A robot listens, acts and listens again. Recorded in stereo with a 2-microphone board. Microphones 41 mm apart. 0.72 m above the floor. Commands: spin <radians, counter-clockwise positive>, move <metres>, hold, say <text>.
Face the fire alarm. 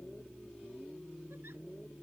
hold
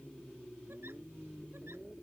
hold
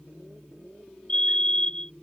spin 0.44
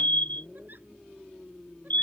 spin 2.27
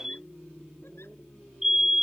spin -0.17
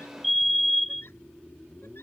say Facing the fire alarm.